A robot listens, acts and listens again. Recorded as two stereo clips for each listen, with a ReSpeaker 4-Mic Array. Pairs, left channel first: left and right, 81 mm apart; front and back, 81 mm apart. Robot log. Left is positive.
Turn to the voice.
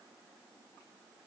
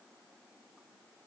cmd idle
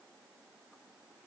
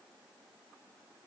cmd idle
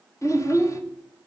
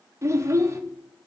note: The child speaking: 135° left.
cmd yaw +135
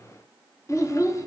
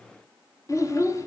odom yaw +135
note: The child speaking is now 45° left.
cmd yaw +45
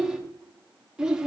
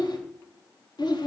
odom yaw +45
note: The child speaking is now 10° right.
cmd yaw -10
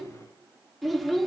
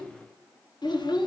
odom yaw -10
end: Facing the child speaking.